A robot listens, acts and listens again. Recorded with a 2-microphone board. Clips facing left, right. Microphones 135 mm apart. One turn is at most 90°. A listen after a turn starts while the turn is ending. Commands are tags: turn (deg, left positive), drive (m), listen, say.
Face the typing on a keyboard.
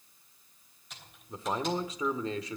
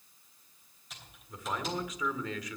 <turn deg="30"/>
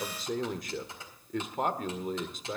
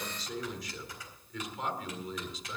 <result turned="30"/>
<turn deg="90"/>
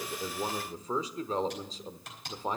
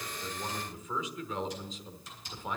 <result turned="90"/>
<turn deg="75"/>
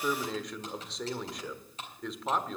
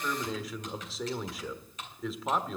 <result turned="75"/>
<turn deg="35"/>
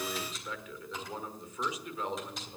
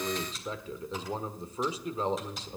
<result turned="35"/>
<say>Facing the typing on a keyboard, 2 to 4 m away.</say>